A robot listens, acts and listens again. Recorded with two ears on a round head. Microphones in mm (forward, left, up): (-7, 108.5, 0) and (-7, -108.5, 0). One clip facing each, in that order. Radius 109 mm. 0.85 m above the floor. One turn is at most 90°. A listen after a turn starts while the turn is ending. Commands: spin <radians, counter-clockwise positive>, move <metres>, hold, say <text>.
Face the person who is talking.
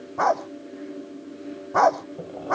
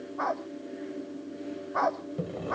hold
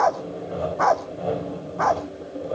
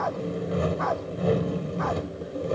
hold
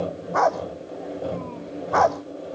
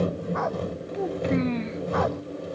spin -1.57
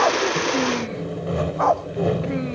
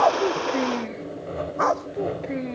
hold
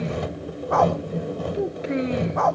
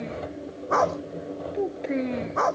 spin 0.17
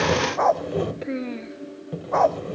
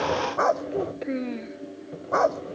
say Found it: a child speaking, straight ahead.